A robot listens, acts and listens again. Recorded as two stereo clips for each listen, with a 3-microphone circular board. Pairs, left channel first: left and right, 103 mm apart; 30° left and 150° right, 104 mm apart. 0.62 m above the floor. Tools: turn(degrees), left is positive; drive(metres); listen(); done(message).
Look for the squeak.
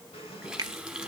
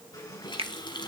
turn(degrees=80)
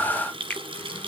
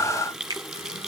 listen()
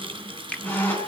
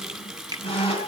turn(degrees=20)
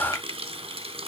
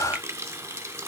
listen()
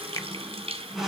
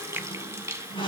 done("Facing the squeak, over 4 m away.")